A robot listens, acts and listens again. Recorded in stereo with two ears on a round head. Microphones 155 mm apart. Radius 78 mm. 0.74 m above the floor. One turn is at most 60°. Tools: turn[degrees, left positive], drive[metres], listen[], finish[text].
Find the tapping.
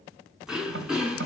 Action: turn[-60]
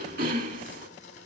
Thought: Nothing new. It was at 30° right.
Action: turn[-30]
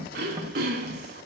Thought: The tapping is now 30° right.
Action: turn[-30]
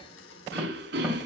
Action: listen[]
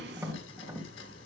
Thought: The tapping is now 10° right.
Action: turn[-10]
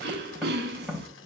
Action: finish[Facing the tapping, 2 to 4 m away.]